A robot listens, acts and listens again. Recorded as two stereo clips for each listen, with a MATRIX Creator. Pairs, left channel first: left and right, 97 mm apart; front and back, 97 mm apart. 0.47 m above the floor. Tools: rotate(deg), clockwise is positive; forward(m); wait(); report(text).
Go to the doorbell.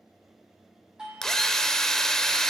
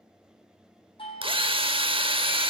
rotate(10)
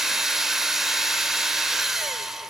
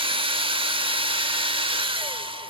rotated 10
wait()
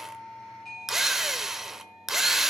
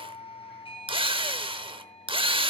forward(1.0)
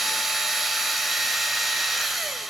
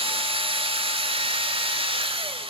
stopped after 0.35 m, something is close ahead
wait()
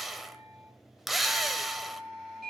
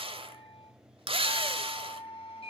report("Blocked. The doorbell is further on, straight ahead.")